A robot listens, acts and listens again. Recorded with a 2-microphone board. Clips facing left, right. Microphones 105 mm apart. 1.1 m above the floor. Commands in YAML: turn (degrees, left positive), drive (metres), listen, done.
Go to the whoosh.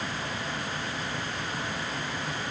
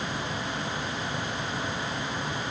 listen: true
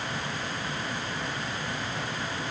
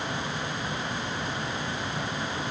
listen: true
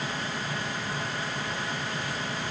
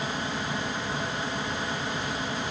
done: "I can't make out a whoosh to turn to."